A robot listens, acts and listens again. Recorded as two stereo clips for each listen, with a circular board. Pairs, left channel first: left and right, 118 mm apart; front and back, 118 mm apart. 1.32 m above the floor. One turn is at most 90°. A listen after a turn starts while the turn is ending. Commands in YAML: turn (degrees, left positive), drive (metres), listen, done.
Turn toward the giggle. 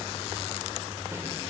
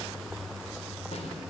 listen: true
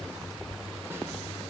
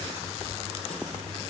listen: true
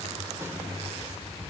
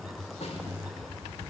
done: "I can't make out a giggle to turn to."